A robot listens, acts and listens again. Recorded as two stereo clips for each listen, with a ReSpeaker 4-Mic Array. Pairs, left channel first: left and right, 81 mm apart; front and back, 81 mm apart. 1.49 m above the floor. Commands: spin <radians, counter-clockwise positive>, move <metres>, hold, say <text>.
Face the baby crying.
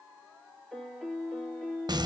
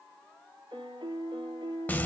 hold
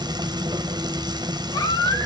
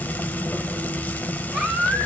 spin 1.75
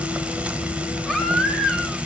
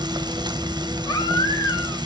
say Facing the baby crying, 1 to 2 m away.